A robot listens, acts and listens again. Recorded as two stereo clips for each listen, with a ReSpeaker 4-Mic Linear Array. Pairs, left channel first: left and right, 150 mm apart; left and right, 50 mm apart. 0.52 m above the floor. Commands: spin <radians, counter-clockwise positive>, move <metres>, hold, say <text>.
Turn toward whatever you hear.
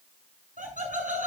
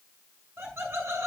spin -1.05
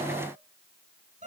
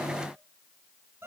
spin -0.96
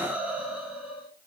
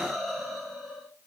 say Found it: laughter, straight ahead, over 4 m away.